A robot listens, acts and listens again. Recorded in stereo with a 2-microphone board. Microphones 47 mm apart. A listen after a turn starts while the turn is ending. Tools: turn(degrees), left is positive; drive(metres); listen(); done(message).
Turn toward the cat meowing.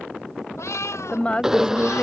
turn(degrees=90)
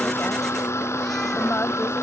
listen()
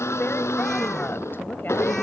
listen()
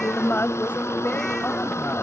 done("I heard a cat meowing from this way, but can't make it out now.")